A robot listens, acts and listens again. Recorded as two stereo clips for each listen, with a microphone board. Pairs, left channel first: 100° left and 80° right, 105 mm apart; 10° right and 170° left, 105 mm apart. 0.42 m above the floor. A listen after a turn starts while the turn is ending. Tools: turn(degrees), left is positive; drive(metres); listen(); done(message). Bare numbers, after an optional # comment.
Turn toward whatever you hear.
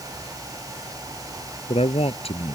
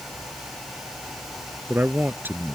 # The man speaking: 100° left.
turn(100)
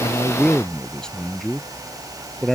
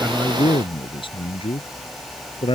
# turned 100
# The man speaking is now 15° left.
turn(15)
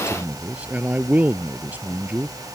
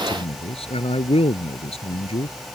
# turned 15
done("Found it: a man speaking, straight ahead.")